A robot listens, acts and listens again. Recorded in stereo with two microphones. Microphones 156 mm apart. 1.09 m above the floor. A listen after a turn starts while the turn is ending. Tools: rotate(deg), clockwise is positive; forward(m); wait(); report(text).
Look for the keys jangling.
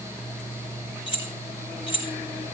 rotate(-35)
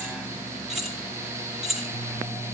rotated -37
report("Facing the keys jangling, 1 to 2 m away.")